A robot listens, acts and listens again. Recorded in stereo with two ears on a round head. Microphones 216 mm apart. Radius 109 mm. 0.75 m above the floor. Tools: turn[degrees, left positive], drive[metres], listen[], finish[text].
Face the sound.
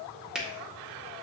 Action: turn[-30]
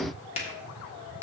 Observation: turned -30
Thought: So it is at 25° left.
Action: turn[25]
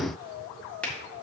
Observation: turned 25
Action: finish[Found it: a finger snap, straight ahead.]